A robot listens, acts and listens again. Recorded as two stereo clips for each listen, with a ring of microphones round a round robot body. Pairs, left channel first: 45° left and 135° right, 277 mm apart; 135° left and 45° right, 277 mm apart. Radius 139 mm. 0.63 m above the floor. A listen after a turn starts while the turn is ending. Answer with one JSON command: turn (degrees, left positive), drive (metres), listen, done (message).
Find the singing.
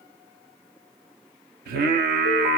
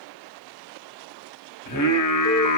{"turn": 165}
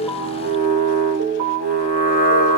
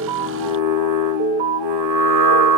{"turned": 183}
{"turn": -15}
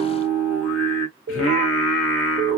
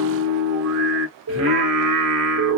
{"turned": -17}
{"done": "Found it: singing, straight ahead, 1 to 2 m away."}